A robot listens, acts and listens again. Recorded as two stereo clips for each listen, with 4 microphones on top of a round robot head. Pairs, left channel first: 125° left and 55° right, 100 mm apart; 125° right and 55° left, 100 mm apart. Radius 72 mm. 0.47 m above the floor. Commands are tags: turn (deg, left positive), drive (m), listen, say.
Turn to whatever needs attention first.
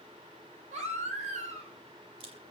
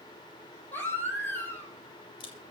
<turn deg="-55"/>
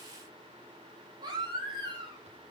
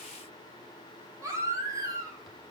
<say>Facing the baby crying.</say>